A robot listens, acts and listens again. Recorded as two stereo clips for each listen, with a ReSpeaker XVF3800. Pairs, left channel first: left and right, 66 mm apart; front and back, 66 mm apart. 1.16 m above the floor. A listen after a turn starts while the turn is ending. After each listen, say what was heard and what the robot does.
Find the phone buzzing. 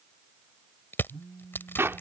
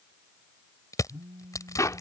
The phone buzzing: 155° right. Turn 155° right.
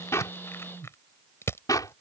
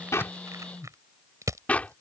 The phone buzzing is now 50° right. Turn 50° right.
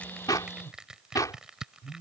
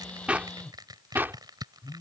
Facing the phone buzzing.